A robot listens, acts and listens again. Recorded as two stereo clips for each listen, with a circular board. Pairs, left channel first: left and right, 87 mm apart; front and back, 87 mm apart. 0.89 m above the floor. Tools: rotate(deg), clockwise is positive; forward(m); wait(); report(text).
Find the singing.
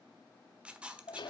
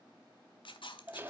wait()
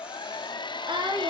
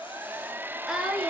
rotate(95)
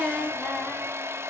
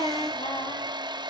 report("Facing the singing, over 4 m away.")